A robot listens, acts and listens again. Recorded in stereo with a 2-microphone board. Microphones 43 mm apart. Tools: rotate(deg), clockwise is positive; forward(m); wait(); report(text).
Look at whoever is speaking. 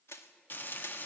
wait()
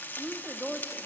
rotate(30)
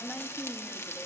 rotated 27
rotate(-20)
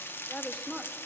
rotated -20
report("Found it: a woman speaking, straight ahead, 1 to 2 m away.")